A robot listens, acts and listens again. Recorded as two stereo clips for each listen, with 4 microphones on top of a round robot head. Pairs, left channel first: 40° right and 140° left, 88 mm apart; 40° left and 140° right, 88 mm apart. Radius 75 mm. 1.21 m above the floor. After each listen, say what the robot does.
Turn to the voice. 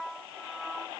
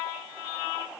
Keep listening.
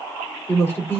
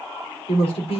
Turn 25° left.
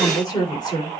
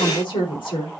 Facing the woman speaking, 2 to 4 m away.